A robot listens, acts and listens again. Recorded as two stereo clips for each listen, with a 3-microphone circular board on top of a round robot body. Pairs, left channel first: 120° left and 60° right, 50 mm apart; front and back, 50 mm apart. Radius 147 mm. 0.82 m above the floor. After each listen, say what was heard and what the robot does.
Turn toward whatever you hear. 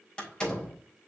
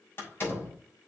The door slam: 50° left. Turn 50° left.
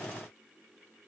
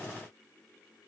Facing where the door slam came from. I can't hear it now.